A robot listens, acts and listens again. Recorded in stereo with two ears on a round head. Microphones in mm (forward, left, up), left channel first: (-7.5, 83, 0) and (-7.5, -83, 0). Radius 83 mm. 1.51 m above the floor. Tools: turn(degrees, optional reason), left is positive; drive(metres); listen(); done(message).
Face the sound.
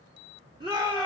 turn(degrees=-25, reason="The shout: about 25° right or 155° right.")
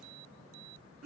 turn(degrees=-130, reason="So it is at 130° right.")
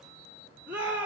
turn(degrees=-10, reason="The shout is now 10° right.")
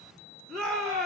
done("Found it: a shout, straight ahead, 2 to 4 m away.")